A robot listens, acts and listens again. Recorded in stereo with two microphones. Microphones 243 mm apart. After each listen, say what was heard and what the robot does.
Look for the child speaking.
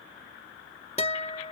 Keep listening.
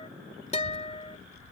The child speaking: about 65° right or 115° right. Turn 65° right.
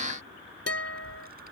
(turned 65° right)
So it is at 40° right. Turn 40° right.
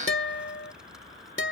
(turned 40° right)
Keep listening.
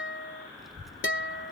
Facing the child speaking.